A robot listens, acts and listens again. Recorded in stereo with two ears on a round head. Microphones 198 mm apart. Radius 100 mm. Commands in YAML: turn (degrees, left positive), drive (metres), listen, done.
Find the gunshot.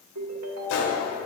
turn: 60
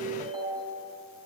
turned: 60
listen: true
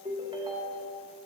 done: "I heard a gunshot, but can't make it out now. It was about straight ahead or 60° left."